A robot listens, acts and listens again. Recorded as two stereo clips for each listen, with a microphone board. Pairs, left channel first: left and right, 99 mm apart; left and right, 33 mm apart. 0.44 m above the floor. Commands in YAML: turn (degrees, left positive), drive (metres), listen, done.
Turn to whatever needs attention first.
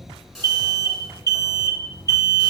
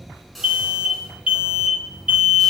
turn: -35
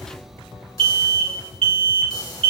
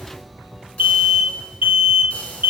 turn: -110
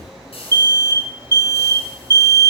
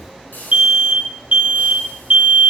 turn: -40
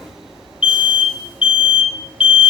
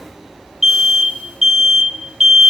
turn: -10
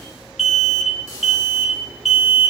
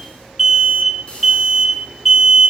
done: "Facing the alarm, 1 to 2 m away."